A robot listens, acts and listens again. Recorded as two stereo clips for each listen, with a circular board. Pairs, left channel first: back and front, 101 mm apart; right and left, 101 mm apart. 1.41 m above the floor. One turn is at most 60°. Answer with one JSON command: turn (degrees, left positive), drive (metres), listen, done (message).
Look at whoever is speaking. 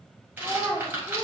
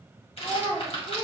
{"turn": -60}
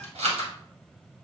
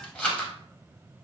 {"turn": -50}
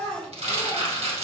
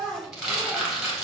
{"turn": -35}
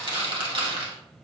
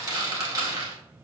{"listen": true}
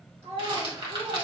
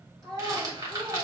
{"done": "Found it: a child speaking, straight ahead, 2 to 4 m away."}